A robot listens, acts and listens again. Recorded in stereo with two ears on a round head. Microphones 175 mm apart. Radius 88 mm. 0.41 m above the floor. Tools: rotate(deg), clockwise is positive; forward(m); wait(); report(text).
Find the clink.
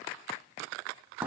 wait()
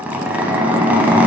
wait()
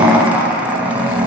report("I can't make out a clink to turn to.")